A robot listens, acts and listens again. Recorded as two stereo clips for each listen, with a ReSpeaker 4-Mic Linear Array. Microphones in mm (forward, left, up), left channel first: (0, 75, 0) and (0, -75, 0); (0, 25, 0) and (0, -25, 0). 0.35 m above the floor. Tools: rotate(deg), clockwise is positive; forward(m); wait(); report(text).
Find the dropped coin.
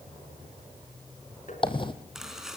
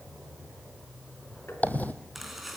rotate(-35)
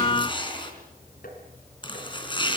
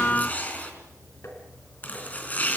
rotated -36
wait()
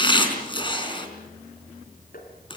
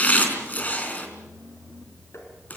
report("I heard a dropped coin, but can't make it out now. It was about straight ahead or 110° left.")